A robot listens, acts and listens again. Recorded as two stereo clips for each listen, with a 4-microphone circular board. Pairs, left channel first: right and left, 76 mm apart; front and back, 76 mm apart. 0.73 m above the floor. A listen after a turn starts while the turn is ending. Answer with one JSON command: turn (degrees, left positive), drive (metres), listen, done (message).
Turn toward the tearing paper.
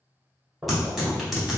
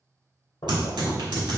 {"turn": 180}
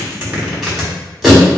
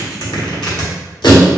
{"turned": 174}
{"done": "Facing the tearing paper."}